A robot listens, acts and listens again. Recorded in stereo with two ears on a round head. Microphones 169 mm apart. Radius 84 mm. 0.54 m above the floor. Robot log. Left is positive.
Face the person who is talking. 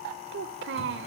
note: The child speaking: about 65° right or 115° right.
cmd yaw -65
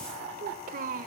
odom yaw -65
note: So it is at 45° right.
cmd yaw -45
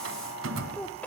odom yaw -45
note: The child speaking is now 10° left.
cmd yaw +10
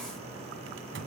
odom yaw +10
cmd idle
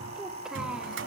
cmd idle
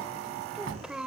end: Found it: a child speaking, straight ahead, 1 to 2 m away.